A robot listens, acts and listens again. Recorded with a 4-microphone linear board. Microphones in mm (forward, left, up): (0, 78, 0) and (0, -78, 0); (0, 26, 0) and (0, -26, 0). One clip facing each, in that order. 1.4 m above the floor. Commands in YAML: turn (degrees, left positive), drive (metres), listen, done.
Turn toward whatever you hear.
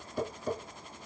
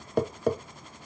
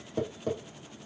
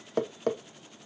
turn: -70
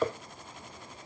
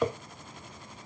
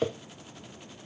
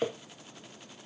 done: "Found it: tapping, straight ahead, under 1 m away."